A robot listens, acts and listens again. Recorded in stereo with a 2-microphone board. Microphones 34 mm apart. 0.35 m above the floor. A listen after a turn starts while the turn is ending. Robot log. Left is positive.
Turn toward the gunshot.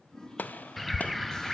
note: The gunshot: about 65° left or 115° left.
cmd yaw +65
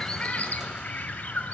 cmd idle
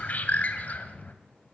end: I heard a gunshot, but can't make it out now. It was about straight ahead or 50° left.